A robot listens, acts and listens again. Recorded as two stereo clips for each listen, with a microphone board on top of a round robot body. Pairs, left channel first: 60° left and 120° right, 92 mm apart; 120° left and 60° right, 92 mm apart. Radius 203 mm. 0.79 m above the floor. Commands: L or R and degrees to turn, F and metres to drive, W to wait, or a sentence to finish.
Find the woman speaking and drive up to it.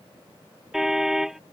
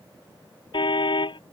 W
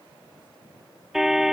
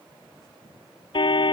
W
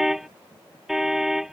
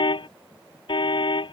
I can't make out a woman speaking, only a car horn.